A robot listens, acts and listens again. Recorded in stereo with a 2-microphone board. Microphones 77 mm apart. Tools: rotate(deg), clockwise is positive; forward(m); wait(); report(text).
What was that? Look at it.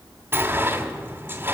rotate(25)
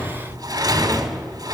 rotate(130)
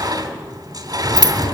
rotate(55)
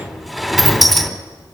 report("Found it: a sliding door, straight ahead, 2 to 4 m away.")